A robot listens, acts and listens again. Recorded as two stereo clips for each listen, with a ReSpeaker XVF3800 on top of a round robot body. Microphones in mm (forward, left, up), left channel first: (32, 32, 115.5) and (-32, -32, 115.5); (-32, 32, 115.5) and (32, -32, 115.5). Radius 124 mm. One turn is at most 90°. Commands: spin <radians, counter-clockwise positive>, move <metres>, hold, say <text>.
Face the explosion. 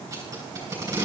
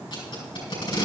hold
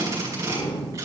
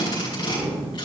spin 0.61
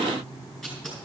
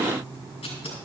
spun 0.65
say Facing where the explosion came from. I can't hear it now.